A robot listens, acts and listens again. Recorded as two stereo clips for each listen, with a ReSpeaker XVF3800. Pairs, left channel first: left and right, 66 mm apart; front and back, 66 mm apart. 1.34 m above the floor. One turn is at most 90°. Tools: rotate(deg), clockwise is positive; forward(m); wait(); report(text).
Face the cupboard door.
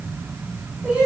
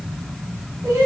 wait()
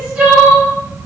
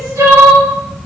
wait()
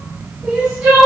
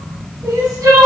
report("I can't make out a cupboard door, only crying.")